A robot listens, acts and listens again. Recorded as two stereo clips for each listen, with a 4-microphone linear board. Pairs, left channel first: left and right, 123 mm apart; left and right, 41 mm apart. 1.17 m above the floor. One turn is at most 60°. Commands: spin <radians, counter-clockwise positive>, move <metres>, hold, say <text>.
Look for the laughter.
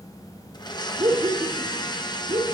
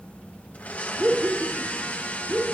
spin -0.87
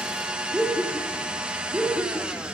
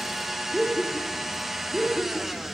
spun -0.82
spin -0.35
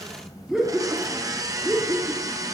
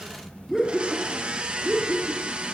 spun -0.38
spin -0.26
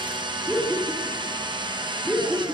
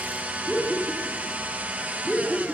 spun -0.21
say Found it: laughter, straight ahead, 2 to 4 m away.